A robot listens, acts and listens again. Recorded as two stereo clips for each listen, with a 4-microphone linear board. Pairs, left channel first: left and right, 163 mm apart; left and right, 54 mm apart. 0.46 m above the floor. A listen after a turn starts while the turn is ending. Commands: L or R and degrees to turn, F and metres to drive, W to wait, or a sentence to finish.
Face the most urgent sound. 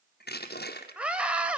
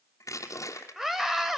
R30
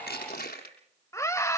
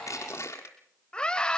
L20
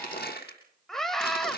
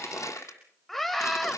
Facing the scream, 2 to 4 m away.